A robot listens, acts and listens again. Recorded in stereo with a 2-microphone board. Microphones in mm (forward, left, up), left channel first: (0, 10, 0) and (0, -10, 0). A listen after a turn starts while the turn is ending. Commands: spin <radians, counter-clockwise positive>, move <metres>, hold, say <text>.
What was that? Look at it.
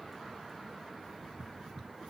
hold
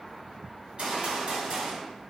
spin -0.96
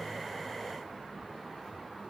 hold
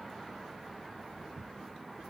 say I heard a gunshot, but can't make it out now. It was about straight ahead or 70° right.